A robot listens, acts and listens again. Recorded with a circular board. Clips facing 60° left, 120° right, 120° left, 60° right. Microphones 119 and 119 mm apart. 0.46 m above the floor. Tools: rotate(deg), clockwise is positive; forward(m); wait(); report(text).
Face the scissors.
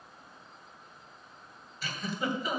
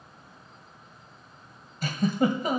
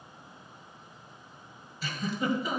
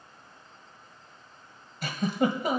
wait()
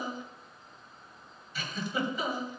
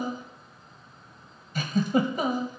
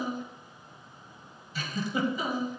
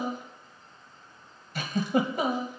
wait()
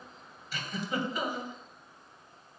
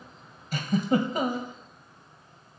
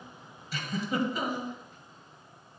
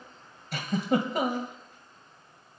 report("I can't make out scissors to turn to.")